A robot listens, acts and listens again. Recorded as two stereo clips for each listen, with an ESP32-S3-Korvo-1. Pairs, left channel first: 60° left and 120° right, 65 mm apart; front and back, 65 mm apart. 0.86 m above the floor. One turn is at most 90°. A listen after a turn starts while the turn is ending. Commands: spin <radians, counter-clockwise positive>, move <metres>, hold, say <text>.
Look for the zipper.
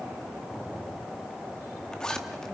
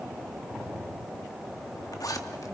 spin -0.35
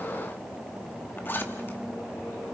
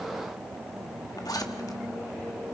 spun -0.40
say Found it: a zipper, straight ahead, 1 to 2 m away.